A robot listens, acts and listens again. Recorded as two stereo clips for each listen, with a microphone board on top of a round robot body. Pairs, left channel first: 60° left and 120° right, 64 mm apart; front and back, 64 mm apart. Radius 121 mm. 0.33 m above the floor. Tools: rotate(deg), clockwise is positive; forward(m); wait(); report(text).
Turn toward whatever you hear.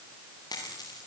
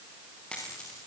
rotate(-75)
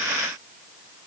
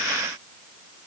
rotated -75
report("Facing where the dropped coin came from. I can't hear it now.")